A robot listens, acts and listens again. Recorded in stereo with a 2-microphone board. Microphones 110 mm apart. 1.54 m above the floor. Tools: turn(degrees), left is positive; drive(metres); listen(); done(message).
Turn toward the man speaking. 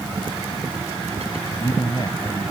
turn(degrees=45)
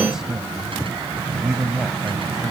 done("Found it: a man speaking, straight ahead.")